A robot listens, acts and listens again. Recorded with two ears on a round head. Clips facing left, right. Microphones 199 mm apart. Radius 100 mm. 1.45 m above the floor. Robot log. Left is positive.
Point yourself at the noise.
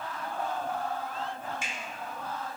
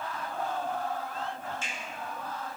cmd yaw +30
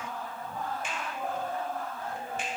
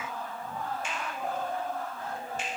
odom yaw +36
note: So it is at 130° left.
cmd yaw +130
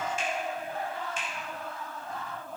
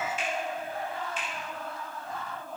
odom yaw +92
note: The finger snap is now 40° left.
cmd yaw +40
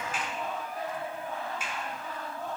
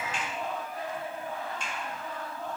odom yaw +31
cmd idle
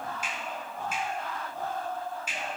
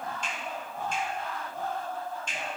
end: Facing the finger snap.